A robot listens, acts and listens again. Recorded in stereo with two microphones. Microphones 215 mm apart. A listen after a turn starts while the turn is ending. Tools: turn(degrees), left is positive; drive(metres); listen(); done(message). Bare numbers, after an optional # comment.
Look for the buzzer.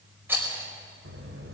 turn(-90)
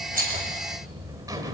# So it is at 15° right.
turn(-15)
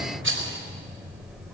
done("Found it: a buzzer, straight ahead.")